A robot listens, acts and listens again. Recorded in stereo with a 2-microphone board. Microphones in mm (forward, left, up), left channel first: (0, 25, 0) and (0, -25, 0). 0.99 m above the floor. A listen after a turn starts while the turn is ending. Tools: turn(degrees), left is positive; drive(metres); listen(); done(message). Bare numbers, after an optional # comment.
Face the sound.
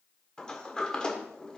# The sliding door: about 15° left or 165° left.
turn(15)
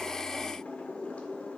# So it is at 150° left.
turn(150)
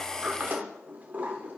# The sliding door is now 35° right.
turn(-35)
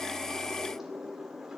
# The sliding door is now 10° right.
turn(-10)
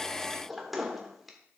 done("Facing the sliding door.")